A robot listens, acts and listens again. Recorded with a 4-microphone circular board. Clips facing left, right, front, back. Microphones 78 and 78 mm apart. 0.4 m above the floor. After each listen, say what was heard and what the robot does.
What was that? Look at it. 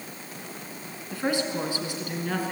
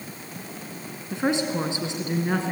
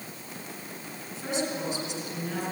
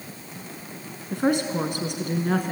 The woman speaking: 155° right. Turn 155° right.
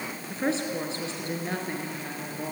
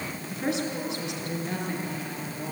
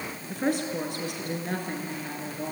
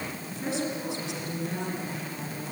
The woman speaking is now 40° left. Turn 40° left.
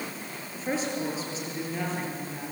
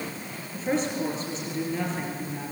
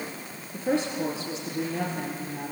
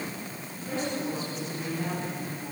Found it: a woman speaking, straight ahead.